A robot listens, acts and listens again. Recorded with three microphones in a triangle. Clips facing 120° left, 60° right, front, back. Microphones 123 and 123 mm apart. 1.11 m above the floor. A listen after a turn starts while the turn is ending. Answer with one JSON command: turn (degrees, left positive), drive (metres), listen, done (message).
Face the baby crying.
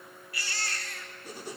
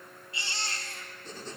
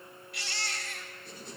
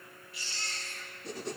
{"done": "Found it: a baby crying, straight ahead, 2 to 4 m away."}